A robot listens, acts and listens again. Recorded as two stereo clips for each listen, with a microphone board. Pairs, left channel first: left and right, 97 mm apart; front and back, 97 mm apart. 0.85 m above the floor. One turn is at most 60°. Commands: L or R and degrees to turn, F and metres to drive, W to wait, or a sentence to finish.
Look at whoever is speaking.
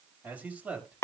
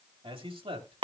R60
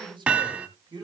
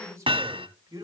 R60
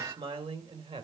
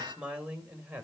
R60
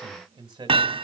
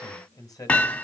R50
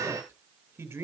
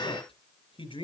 R20
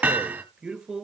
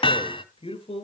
Facing the man speaking, 2 to 4 m away.